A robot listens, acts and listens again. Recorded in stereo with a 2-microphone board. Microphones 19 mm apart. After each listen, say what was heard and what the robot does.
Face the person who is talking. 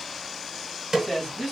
Turn 30° left.
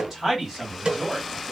So it is at 20° right. Turn 20° right.
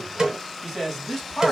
Facing the man speaking.